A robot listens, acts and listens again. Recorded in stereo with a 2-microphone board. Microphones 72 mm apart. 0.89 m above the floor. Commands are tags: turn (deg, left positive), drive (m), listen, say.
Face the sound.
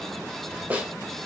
<turn deg="-20"/>
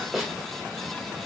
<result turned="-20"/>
<say>Found it: a snare drum, straight ahead, 1 to 2 m away.</say>